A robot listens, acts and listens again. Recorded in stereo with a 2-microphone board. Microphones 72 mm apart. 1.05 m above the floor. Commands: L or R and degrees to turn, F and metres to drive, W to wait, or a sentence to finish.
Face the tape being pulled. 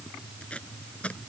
L15
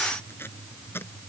L150
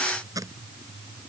R55
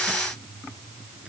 W
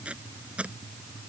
R15
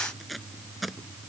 Facing the tape being pulled.